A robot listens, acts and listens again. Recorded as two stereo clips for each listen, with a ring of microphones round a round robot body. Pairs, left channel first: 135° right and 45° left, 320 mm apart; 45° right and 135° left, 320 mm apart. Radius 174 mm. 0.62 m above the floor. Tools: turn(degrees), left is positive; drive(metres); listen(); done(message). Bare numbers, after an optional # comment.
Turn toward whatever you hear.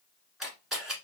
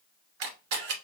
# The camera shutter: 135° left.
turn(135)
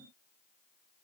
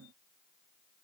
listen()
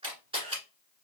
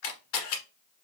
# The camera shutter is now 30° right.
turn(-30)
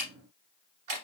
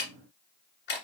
# The camera shutter is now 15° left.
turn(15)
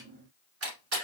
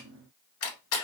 done("Found it: a camera shutter, straight ahead.")